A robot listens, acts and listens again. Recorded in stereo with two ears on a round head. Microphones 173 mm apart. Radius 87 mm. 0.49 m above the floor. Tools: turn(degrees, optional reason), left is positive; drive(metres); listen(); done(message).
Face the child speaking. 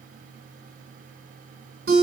listen()
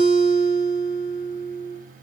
listen()
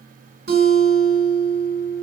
done("I can't make out a child speaking to turn to.")